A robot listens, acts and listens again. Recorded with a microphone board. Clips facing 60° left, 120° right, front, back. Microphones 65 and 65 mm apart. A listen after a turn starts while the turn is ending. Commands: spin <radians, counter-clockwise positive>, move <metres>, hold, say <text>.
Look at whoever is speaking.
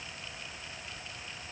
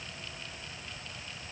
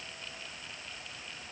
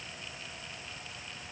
hold
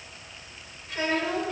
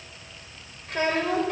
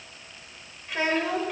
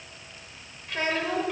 spin -1.48
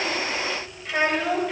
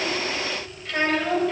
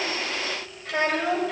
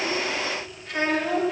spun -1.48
spin -0.35
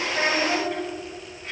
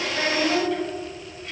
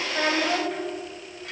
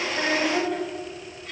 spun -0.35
say Facing the child speaking, 2 to 4 m away.